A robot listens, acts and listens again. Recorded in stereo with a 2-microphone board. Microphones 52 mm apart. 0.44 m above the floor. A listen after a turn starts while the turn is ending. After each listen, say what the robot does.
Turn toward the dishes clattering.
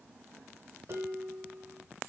Turn 60° right.
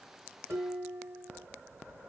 Turn 60° right.
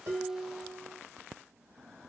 Turn 10° right.
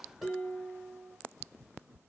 Facing the dishes clattering.